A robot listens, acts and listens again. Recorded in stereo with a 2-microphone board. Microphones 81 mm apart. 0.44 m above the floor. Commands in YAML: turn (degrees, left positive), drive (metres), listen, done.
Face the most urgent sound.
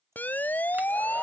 turn: 20
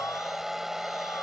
listen: true
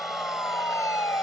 turn: 135
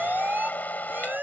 turn: -25
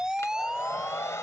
turn: -10
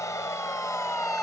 listen: true
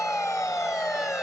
done: "Facing the siren."